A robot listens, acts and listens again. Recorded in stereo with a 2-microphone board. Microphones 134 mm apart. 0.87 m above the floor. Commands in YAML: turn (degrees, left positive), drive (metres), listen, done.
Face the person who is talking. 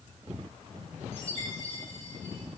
listen: true
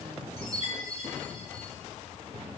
listen: true
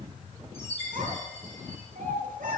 turn: -90
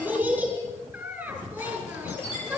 turn: -10
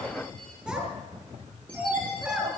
done: "Found it: a child speaking, straight ahead, over 4 m away."